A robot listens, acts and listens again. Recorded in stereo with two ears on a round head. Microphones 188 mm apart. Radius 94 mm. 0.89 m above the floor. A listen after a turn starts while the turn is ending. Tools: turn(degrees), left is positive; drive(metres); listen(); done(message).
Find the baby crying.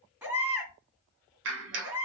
turn(degrees=-30)
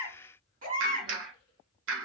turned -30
turn(degrees=-140)
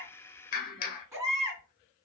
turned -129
turn(degrees=-15)
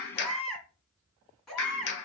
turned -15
done("Found it: a baby crying, straight ahead, 2 to 4 m away.")